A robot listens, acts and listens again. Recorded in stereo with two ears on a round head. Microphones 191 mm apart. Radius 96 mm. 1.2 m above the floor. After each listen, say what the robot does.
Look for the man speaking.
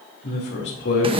Turn 60° left.
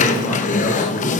Keep listening.
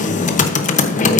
Keep listening.
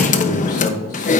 Turn 35° left.
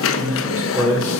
Found it: a man speaking, straight ahead.